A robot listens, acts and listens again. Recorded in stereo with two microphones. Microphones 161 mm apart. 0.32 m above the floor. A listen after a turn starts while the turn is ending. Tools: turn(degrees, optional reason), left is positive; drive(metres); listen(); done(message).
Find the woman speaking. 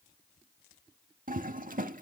listen()
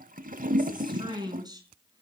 turn(degrees=-25, reason="The woman speaking: about 25° right or 155° right.")
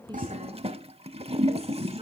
listen()
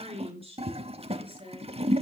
turn(degrees=-35, reason="The woman speaking: about 35° right or 145° right.")
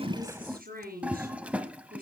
turn(degrees=-115, reason="So it is at 115° right.")
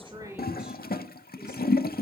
listen()
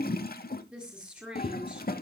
done("Found it: a woman speaking, straight ahead, over 4 m away.")